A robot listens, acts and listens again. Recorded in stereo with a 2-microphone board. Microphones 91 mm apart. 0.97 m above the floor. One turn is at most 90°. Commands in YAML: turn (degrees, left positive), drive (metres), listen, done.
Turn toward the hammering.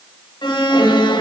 listen: true
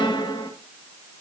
listen: true
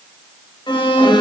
done: "I can't make out hammering, only an alarm."